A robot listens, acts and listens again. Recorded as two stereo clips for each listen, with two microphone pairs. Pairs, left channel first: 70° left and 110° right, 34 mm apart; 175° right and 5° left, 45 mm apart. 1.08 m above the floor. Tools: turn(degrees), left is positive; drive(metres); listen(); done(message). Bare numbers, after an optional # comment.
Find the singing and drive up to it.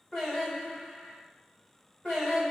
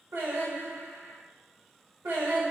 drive(1.0)
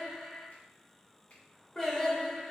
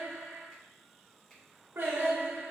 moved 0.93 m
# The singing is now 10° right.
turn(-10)
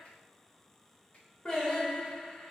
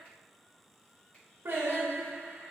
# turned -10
drive(1.0)
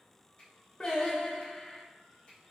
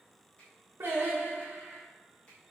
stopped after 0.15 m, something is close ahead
done("I am next to the singing.")